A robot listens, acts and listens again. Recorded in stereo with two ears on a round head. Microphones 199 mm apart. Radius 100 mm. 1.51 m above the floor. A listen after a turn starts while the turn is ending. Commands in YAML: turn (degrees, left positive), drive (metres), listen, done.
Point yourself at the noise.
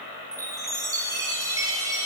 turn: -30
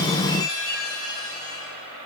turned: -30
turn: 20
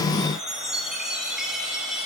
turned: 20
done: "Facing the chime."